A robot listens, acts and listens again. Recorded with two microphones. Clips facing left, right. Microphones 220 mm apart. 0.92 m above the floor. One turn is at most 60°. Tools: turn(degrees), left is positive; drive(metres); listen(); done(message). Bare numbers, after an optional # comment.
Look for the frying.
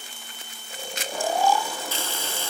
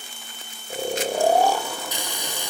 # The frying: about 15° right or 165° right.
turn(-15)
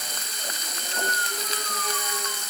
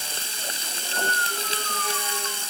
# So it is at 150° right.
turn(-60)
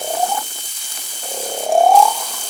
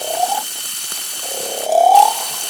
# The frying is now 100° right.
turn(-60)
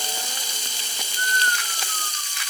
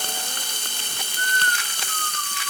# The frying is now 65° right.
turn(-60)
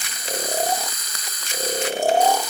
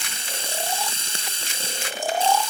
# The frying is now 30° right.
turn(-30)
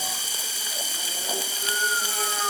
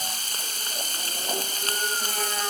# The frying is now 10° left.
turn(10)
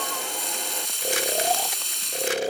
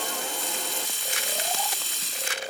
done("Facing the frying.")